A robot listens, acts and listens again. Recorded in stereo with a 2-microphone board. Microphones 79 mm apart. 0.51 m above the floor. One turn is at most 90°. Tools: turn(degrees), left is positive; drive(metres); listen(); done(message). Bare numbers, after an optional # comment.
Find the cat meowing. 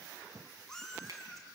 turn(30)
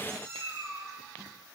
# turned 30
# So it is at 35° right.
turn(-35)
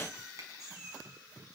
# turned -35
done("Facing the cat meowing.")